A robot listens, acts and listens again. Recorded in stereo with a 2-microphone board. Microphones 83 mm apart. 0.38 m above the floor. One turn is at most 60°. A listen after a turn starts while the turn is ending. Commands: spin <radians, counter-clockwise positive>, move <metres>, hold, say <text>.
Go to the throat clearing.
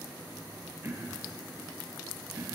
spin -0.52
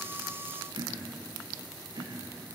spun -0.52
spin -1.05
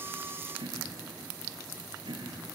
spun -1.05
spin -1.05
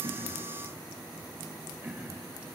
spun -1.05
spin -0.35
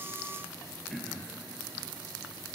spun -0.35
move 1.0
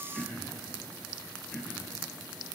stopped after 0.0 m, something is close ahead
say Blocked. The throat clearing is further on, straight ahead.